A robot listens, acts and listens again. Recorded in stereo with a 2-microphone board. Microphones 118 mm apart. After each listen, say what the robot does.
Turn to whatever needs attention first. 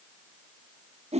Keep listening.
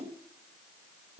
Keep listening.
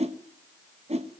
I can't make out anything urgent, only a whoosh.